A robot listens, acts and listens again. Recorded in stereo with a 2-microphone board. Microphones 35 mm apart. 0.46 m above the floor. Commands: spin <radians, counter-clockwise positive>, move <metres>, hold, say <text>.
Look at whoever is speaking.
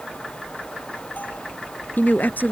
spin 1.13
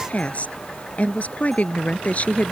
spin 0.87
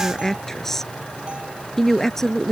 spin 0.26
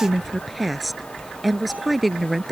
say Found it: a woman speaking, straight ahead.